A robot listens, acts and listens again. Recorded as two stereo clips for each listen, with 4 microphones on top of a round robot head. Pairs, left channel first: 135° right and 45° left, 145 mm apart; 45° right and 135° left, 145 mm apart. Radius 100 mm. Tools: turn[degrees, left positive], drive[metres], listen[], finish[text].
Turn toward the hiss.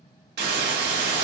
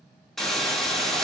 Thought: The hiss: 45° left.
Action: turn[45]
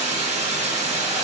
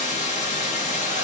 Action: finish[Facing the hiss, 1 to 2 m away.]